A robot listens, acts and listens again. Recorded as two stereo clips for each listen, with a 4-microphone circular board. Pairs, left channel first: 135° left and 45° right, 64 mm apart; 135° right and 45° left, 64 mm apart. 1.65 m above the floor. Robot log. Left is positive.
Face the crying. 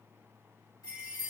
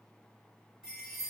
cmd idle
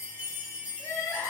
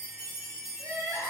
note: The crying: 85° left.
cmd yaw +85
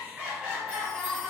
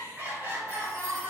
note: The crying is now 30° left.
cmd yaw +30
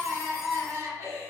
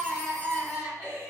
end: Found it: crying, straight ahead.